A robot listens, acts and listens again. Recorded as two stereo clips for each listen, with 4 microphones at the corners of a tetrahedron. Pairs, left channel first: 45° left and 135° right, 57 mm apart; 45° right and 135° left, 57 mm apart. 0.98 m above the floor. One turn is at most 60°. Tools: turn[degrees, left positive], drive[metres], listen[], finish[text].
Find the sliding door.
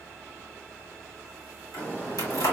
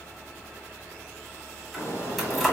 Thought: The sliding door: 15° right.
Action: turn[-15]
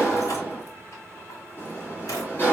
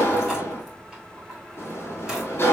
Action: finish[Found it: a sliding door, straight ahead, 2 to 4 m away.]